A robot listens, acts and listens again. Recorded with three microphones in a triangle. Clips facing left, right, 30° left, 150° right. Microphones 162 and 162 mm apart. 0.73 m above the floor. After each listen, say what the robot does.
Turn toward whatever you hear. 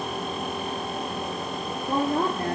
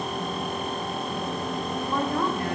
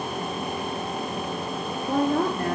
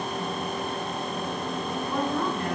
Turn 45° left.
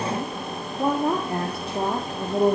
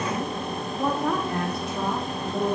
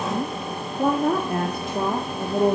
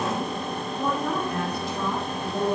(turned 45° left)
Turn 55° left.
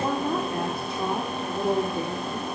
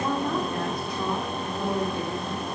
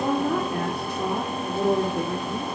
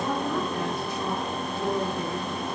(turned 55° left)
Turn 30° left.
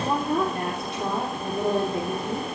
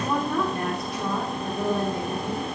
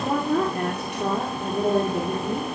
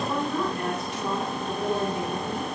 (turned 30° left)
Turn 30° left.
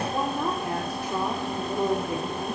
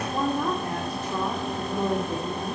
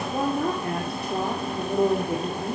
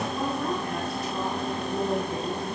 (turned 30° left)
Turn 15° left.
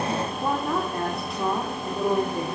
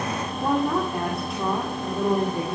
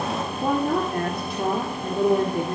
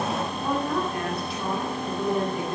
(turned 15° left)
Facing the woman speaking.